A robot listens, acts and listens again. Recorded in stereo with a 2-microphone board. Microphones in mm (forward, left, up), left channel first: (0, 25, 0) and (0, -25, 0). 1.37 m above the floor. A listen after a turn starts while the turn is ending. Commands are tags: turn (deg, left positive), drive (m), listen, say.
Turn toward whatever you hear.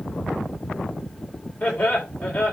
<turn deg="20"/>
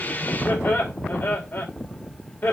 <turn deg="140"/>
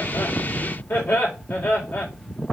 <turn deg="50"/>
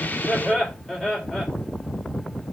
<turn deg="10"/>
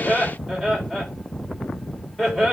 <say>Facing the laughter.</say>